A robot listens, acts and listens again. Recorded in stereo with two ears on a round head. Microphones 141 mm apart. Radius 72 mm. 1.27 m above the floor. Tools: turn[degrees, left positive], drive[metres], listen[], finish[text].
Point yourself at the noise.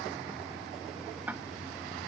Action: turn[-30]
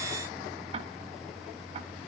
Thought: So it is at 145° right.
Action: turn[-145]
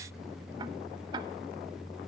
Thought: The ticking is now 25° right.
Action: turn[-25]
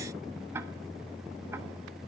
Thought: The ticking is now 15° right.
Action: turn[-15]
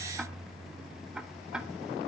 Action: finish[Found it: ticking, straight ahead, under 1 m away.]